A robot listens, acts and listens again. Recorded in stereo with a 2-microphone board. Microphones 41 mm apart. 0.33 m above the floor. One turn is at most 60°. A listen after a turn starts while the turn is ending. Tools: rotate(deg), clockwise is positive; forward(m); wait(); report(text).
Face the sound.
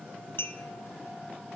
rotate(-60)
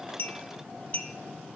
rotate(-40)
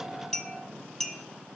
rotate(-10)
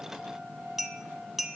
report("Found it: a clink, straight ahead, 1 to 2 m away.")